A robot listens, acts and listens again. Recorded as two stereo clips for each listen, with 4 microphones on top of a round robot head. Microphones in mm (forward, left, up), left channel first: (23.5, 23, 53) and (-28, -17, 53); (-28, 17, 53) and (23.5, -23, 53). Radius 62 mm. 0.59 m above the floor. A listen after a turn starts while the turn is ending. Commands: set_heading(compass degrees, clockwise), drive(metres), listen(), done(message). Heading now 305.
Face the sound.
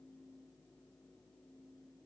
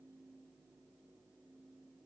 listen()
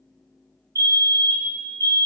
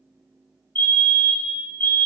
set_heading(105)
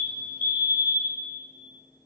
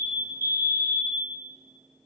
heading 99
done("Facing the fire alarm, 2 to 4 m away.")